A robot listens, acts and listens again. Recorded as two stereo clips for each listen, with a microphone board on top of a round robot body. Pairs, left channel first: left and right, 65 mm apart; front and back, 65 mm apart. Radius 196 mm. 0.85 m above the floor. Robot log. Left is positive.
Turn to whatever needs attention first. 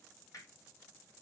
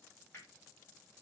cmd idle
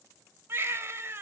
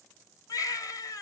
note: The baby crying: 30° right.
cmd yaw -30
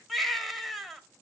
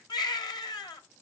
end: Found it: a baby crying, straight ahead, 1 to 2 m away.